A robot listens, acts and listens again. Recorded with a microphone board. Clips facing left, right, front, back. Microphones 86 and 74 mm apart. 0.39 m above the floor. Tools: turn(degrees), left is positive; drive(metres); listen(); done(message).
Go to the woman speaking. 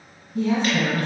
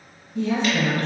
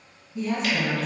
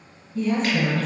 turn(degrees=80)
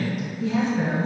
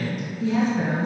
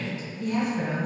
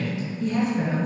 drive(metres=1.0)
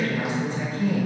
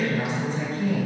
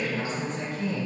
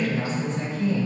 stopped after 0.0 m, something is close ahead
turn(degrees=10)
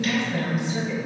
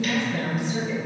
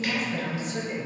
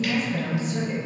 done("Blocked. The woman speaking is further on, straight ahead.")